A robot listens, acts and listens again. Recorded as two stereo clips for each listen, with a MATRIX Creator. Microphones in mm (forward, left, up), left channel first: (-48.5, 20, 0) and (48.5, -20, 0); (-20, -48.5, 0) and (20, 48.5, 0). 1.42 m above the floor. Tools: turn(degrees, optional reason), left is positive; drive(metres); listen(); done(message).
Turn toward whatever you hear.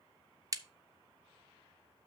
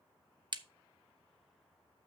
turn(degrees=30, reason="The crack: 30° left.")
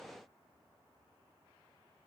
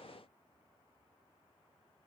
done("Facing where the crack came from. I can't hear it now.")